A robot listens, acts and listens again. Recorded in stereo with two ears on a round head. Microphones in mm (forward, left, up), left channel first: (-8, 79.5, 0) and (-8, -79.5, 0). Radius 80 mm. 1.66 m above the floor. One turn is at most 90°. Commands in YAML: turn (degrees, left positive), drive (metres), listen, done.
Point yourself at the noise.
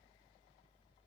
listen: true
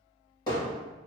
turn: 20
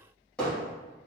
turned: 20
done: "Found it: hammering, straight ahead."